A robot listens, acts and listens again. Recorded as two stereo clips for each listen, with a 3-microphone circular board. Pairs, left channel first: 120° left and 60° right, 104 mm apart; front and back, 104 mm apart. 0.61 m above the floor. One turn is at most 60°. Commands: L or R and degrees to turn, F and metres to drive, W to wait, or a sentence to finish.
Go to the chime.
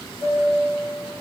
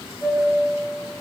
L60
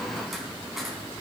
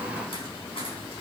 L25
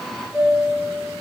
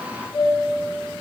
L25
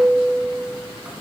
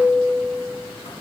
L15
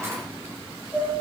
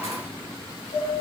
F1.0
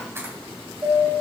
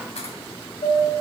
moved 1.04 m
F1.0
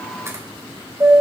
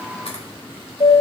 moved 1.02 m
F1.0
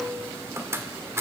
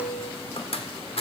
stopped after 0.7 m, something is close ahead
I am next to the chime.